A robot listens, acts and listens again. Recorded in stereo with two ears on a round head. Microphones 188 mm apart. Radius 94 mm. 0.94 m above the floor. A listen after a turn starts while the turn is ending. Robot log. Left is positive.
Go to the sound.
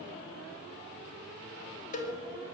note: The cowbell: about 35° left or 145° left.
cmd yaw +35
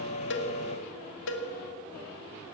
note: So it is at 105° left.
cmd yaw +105
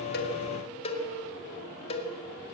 note: The cowbell is now 30° left.
cmd yaw +30
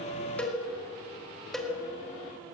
cmd fwd 1.0
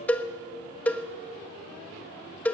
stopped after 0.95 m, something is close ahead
note: The cowbell is now 10° left.
cmd yaw +10
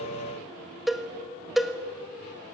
end: Arrived at the cowbell, straight ahead.